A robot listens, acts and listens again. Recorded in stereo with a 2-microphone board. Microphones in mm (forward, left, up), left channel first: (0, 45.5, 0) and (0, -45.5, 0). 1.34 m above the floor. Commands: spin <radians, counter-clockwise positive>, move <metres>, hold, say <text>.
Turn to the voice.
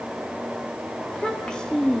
spin 0.52
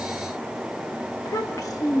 spin 2.44
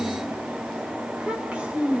spin -0.26
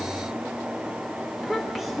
say Facing the child speaking.